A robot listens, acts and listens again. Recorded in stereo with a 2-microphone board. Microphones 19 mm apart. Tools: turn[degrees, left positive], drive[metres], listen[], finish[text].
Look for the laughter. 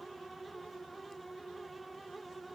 Action: listen[]
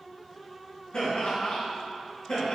Thought: The laughter: about 50° left or 130° left.
Action: turn[50]
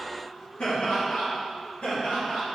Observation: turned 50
Thought: So it is at 85° left.
Action: turn[85]
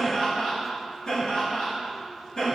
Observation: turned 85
Thought: The laughter is now 30° left.
Action: turn[30]
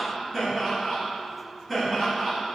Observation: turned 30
Action: finish[Facing the laughter.]